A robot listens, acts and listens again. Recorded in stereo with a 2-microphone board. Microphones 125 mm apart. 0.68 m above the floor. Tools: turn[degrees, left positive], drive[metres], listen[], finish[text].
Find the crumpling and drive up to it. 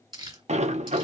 Thought: The crumpling: about 35° right or 145° right.
Action: turn[-35]
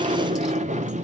Action: listen[]
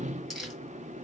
Action: drive[1.0]
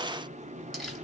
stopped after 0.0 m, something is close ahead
Action: finish[Something is in my way. I am facing the crumpling but have not reached it.]